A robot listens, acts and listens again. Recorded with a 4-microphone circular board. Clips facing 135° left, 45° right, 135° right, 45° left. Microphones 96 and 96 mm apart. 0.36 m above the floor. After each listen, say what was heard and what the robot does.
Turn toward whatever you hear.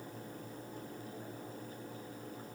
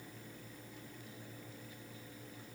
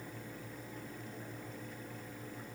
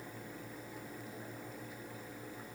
Keep listening.
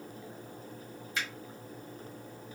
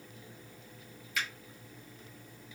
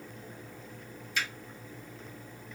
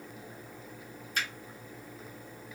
The finger snap: 85° left. Turn 85° left.
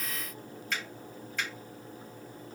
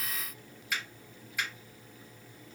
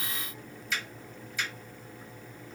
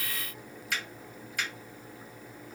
The finger snap is now 35° left. Turn 35° left.
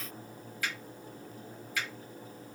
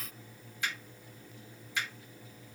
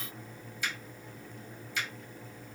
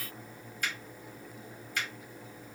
The finger snap is now 15° left. Turn 15° left.
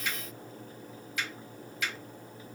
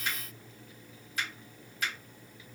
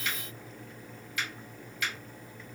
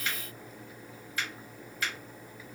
Found it: a finger snap, straight ahead.